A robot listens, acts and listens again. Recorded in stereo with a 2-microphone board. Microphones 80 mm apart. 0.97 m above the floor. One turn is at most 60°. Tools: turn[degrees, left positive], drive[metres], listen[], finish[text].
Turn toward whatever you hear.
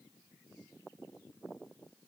Action: listen[]
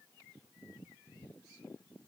Action: listen[]
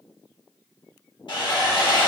Thought: The sawing: about 70° left or 110° left.
Action: turn[60]
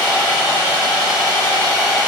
Thought: So it is at 30° left.
Action: turn[30]
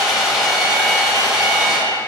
Action: finish[Facing the sawing.]